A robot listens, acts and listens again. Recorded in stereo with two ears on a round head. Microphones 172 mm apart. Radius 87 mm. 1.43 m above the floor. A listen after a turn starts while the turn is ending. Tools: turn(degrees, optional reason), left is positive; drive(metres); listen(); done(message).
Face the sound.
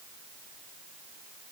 listen()
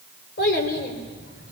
turn(degrees=55, reason="The child speaking: about 55° left or 125° left.")
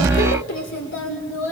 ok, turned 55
turn(degrees=75, reason="So it is at 75° left.")
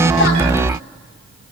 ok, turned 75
turn(degrees=30, reason="The child speaking is now 30° left.")
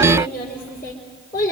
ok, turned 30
turn(degrees=20, reason="The child speaking is now 20° left.")
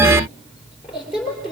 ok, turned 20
done("Found it: a child speaking, straight ahead.")